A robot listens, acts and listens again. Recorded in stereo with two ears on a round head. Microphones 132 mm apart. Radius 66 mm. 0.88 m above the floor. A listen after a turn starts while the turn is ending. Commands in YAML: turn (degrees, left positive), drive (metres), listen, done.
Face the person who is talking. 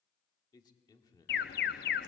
turn: 30
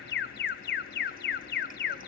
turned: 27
listen: true
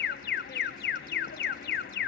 listen: true
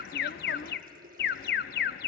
done: "I heard a man speaking, but can't make it out now. It was about straight ahead or 125° left."